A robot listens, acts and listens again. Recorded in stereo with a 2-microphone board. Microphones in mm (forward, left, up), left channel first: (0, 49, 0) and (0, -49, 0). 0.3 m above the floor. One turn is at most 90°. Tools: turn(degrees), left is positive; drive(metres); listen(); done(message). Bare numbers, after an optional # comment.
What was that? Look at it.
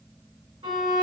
# The violin: about 65° right or 115° right.
turn(-65)
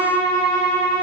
# So it is at 10° right.
turn(-10)
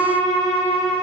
done("Found it: a violin, straight ahead.")